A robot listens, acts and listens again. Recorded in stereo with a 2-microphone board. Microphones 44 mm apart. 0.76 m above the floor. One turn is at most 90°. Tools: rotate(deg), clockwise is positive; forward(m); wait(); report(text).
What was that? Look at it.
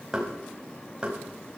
rotate(15)
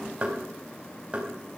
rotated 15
rotate(90)
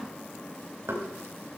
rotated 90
rotate(85)
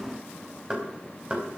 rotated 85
rotate(25)
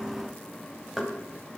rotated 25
report("Facing the knocking, over 4 m away.")